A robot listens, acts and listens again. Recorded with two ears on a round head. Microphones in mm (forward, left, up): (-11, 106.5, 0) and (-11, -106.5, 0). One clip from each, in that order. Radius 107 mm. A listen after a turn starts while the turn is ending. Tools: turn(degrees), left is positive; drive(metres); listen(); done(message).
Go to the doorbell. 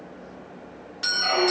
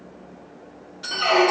turn(degrees=65)
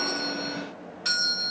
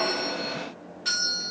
turn(degrees=30)
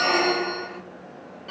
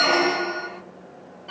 listen()
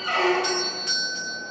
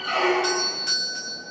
drive(metres=1.0)
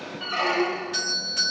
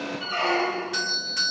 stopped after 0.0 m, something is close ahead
done("Something is in my way. I am facing the doorbell but have not reached it.")